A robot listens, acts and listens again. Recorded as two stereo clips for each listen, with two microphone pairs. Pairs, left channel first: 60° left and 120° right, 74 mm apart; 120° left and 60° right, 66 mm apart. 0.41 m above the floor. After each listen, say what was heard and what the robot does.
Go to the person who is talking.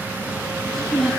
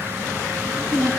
The child speaking: 30° right. Turn 30° right.
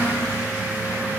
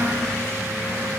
Keep listening.
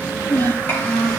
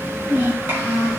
Drive 1.0 m forward.
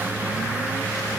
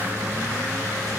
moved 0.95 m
Keep listening.
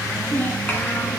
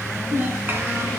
Drive 1.0 m forward.
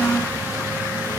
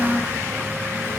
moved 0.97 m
Drive 1.0 m forward.
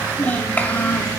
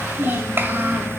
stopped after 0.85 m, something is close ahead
Arrived at the child speaking, straight ahead.